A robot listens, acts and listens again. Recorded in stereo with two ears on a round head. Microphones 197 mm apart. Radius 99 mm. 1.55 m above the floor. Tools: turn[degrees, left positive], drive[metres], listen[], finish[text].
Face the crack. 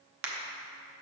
Thought: The crack: about 60° right or 120° right.
Action: turn[-60]
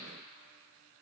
Action: listen[]
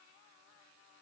Action: finish[I heard a crack, but can't make it out now. It was about straight ahead or 60° right.]